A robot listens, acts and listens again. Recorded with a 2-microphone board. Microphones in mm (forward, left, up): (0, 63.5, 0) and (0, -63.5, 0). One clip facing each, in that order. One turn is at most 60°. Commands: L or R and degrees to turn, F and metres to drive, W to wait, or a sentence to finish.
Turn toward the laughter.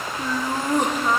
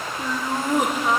R30
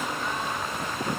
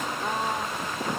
W
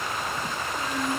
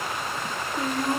R60
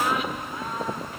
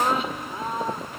R30
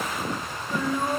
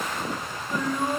L10
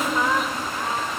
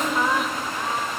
Found it: laughter, straight ahead.